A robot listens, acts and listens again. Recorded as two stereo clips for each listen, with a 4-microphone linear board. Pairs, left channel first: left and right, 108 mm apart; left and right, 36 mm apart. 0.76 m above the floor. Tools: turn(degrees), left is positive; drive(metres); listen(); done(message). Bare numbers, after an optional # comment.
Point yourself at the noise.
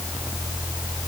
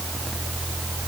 listen()
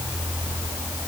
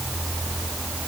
listen()
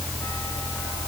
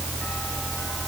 done("I can't make out anything to turn to.")